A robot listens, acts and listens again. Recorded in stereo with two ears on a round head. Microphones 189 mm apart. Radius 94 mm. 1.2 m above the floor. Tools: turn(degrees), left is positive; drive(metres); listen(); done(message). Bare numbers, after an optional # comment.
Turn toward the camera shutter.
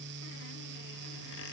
listen()
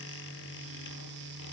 listen()
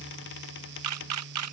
turn(-90)
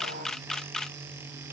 done("Found it: a camera shutter, straight ahead.")